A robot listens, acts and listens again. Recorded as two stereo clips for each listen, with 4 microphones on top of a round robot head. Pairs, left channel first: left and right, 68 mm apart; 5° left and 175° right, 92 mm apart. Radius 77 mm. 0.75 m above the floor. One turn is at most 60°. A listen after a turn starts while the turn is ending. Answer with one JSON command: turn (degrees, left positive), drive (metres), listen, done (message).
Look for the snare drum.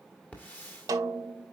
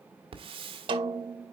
{"turn": -60}
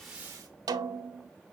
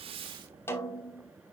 {"turn": -60}
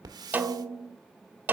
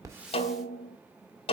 {"turn": -25}
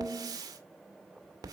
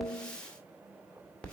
{"turn": -15}
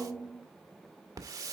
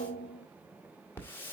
{"done": "Facing the snare drum."}